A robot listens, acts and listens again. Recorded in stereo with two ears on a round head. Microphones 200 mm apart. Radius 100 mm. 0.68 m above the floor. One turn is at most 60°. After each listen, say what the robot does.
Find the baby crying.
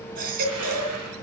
Turn 40° right.
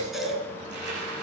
Facing the baby crying.